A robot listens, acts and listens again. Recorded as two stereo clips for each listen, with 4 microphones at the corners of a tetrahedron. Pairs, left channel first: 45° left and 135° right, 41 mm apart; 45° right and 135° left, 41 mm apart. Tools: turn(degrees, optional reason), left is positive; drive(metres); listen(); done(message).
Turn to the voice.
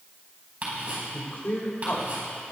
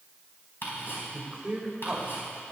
turn(degrees=60, reason="The man speaking: 60° left.")
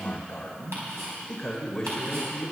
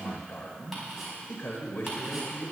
turn(degrees=-35, reason="The man speaking is now 35° right.")
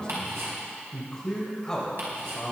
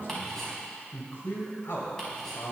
turn(degrees=-30, reason="The man speaking is now 30° right.")
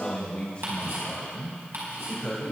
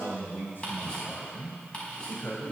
turn(degrees=-15, reason="The man speaking is now 15° right.")
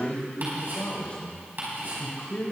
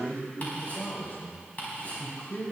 done("Found it: a man speaking, straight ahead, 2 to 4 m away.")